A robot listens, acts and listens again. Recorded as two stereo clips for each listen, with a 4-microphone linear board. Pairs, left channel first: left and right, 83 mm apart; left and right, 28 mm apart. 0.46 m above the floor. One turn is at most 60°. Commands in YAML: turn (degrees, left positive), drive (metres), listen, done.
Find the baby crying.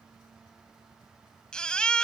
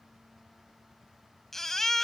turn: 30
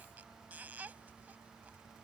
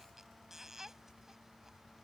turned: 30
turn: -20
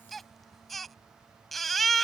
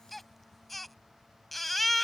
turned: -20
done: "Found it: a baby crying, straight ahead."